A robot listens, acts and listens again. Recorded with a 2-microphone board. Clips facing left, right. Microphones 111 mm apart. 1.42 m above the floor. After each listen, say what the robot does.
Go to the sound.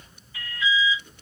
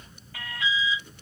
Turn 90° right.
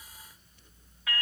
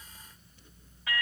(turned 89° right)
Drive 1.0 m forward.
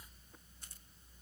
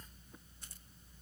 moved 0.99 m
Keep listening.
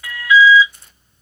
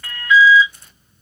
Drive 1.0 m forward.
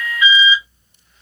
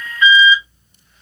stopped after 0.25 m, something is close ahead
Turn 10° left.
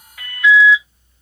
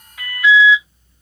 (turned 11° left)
Arrived at the alarm, straight ahead.